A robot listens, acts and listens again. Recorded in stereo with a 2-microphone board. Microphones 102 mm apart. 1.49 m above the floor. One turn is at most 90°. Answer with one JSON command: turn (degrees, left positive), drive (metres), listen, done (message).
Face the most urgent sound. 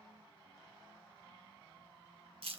{"listen": true}
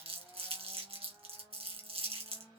{"listen": true}
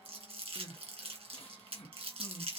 {"turn": 70}
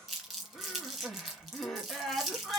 {"done": "Found it: crying, straight ahead."}